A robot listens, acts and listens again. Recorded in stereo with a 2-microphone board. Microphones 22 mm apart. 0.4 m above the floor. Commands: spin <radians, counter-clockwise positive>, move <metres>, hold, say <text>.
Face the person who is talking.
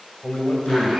spin 1.05
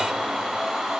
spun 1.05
hold
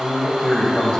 spin 0.61
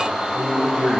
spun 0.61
say Facing the man speaking, 2 to 4 m away.